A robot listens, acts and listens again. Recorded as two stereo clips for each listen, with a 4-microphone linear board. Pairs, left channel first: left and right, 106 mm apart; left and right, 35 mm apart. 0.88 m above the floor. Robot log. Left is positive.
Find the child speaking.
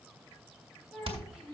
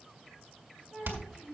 cmd yaw +30
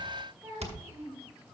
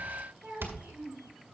note: So it is at 25° right.
cmd yaw -25
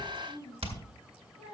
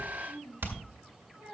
note: The child speaking is now 10° right.
cmd yaw -10
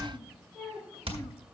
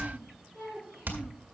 end: Facing the child speaking, over 4 m away.